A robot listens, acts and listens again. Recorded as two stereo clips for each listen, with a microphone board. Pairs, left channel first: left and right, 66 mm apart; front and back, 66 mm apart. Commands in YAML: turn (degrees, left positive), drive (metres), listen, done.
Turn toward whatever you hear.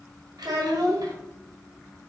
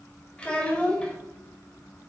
turn: -75
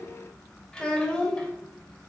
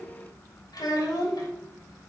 turn: 15
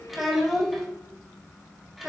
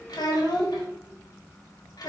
done: "Facing the child speaking."